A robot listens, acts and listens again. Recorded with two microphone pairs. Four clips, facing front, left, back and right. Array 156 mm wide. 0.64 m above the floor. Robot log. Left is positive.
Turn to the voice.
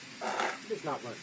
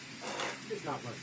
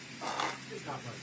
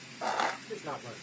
note: The man speaking: 10° left.
cmd yaw +10
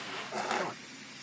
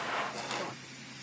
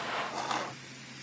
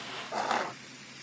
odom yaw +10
cmd idle
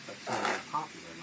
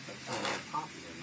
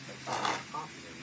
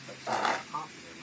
note: The man speaking is now 10° left.
cmd yaw +10
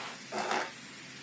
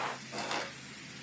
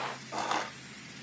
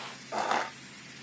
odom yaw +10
cmd idle
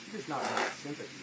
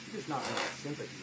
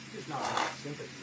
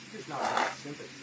note: The man speaking is now 70° left.
cmd yaw +70
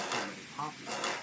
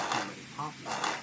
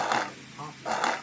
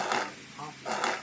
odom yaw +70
note: The man speaking is now 50° left.
cmd yaw +50
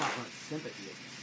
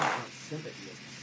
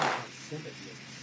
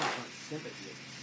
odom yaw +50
end: Facing the man speaking, 1 to 2 m away.